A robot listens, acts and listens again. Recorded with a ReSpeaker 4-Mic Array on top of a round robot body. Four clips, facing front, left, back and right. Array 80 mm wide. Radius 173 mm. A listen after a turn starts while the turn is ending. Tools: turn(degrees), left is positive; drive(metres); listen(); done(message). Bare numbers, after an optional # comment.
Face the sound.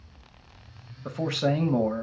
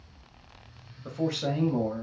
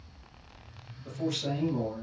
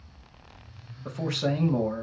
done("Found it: a man speaking, straight ahead.")